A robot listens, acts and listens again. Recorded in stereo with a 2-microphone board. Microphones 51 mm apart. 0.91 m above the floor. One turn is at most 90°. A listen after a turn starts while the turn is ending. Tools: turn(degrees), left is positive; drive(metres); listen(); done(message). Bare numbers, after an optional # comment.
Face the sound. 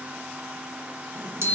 # The chime: about 55° right or 125° right.
turn(-55)
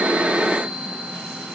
done("Facing the chime, 1 to 2 m away.")